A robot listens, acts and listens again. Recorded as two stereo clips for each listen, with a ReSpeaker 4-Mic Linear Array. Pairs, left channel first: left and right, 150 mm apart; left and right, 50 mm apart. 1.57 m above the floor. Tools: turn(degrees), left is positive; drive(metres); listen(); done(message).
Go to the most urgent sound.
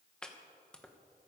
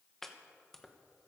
listen()
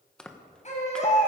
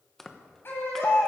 turn(degrees=50)
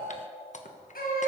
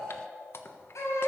turn(degrees=80)
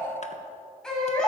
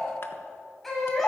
drive(metres=1.0)
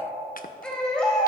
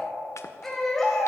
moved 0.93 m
drive(metres=1.0)
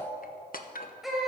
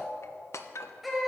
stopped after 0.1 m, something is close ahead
done("Something is in my way. I am facing the baby crying but have not reached it.")